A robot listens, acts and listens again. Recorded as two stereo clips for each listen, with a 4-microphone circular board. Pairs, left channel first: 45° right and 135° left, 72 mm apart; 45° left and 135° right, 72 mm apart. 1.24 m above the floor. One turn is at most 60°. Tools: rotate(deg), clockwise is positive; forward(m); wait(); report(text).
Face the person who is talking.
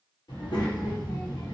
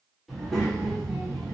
rotate(45)
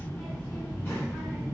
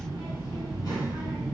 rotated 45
rotate(-15)
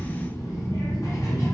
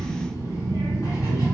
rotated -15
report("Facing the child speaking.")